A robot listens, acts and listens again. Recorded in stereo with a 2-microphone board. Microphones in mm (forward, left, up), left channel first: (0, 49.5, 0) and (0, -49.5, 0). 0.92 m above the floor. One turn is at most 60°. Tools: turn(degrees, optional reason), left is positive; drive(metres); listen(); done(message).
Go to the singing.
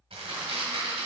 listen()
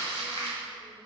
listen()
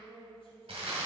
turn(degrees=60, reason="The singing: about 70° left or 110° left.")
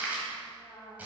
turn(degrees=15, reason="So it is at 15° left.")
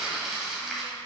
listen()
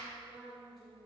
drive(metres=1.0)
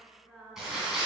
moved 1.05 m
drive(metres=1.0)
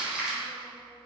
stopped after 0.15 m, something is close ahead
listen()
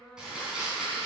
done("I am next to the singing.")